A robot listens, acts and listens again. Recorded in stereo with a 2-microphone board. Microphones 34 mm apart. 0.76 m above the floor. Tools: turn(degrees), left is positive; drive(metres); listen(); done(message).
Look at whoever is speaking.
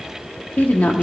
turn(degrees=60)
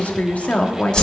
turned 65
turn(degrees=45)
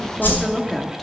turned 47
done("Found it: a woman speaking, straight ahead.")